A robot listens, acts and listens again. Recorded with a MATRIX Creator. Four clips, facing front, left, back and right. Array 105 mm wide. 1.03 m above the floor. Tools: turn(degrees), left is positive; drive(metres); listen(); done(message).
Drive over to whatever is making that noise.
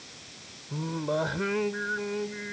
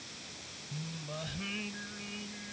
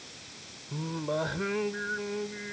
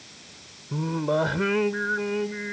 turn(degrees=-85)
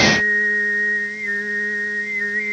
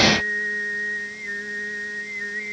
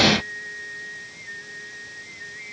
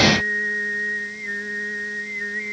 drive(metres=1.0)
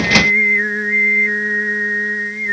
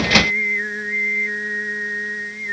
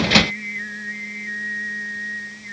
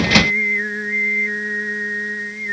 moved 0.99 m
drive(metres=1.0)
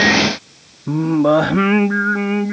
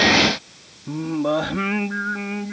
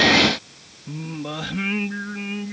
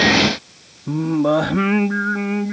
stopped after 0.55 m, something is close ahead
turn(degrees=-10)
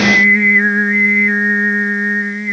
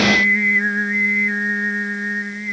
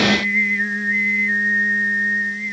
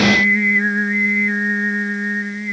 done("I am next to the singing.")